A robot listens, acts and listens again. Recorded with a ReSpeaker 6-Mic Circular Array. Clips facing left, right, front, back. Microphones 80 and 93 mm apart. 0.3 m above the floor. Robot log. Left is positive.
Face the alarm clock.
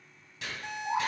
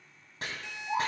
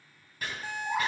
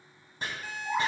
note: The alarm clock: 55° left.
cmd yaw +55
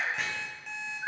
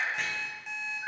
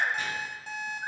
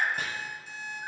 end: Facing the alarm clock.